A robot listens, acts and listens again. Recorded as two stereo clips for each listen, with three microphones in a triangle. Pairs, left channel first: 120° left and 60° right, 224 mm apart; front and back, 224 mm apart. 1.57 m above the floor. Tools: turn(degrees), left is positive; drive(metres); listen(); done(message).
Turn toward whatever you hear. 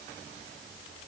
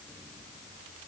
listen()
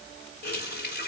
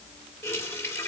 turn(degrees=80)
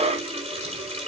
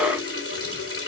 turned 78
done("Found it: a running tap, straight ahead.")